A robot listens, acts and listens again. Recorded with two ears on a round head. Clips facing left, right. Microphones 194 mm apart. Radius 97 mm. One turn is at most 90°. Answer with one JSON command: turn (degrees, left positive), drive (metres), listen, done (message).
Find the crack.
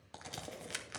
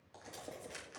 {"turn": 90}
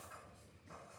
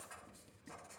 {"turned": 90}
{"done": "Facing where the crack came from. I can't hear it now."}